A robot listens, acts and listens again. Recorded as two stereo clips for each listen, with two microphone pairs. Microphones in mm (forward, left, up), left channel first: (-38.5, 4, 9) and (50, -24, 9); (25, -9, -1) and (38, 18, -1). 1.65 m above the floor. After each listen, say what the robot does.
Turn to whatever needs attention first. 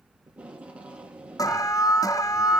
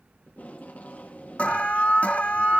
Turn 150° right.
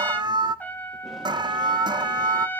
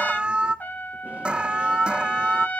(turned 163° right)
Turn 10° left.
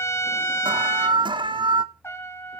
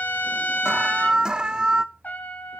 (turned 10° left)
Found it: an alarm, straight ahead.